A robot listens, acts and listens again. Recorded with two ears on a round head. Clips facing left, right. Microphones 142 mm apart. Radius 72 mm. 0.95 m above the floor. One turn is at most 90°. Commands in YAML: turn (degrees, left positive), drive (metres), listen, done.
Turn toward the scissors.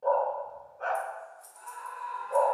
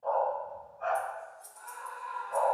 turn: 15
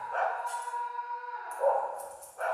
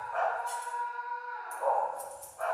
done: "Found it: scissors, straight ahead, 1 to 2 m away."